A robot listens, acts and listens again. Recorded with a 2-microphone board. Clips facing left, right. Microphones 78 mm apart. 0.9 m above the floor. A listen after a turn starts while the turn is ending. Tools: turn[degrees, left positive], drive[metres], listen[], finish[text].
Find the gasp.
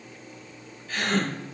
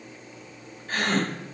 Thought: The gasp: about 45° right or 135° right.
Action: turn[-45]
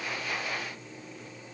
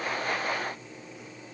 Action: listen[]
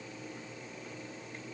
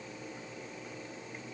Action: finish[I heard a gasp, but can't make it out now. It was about straight ahead or 90° right.]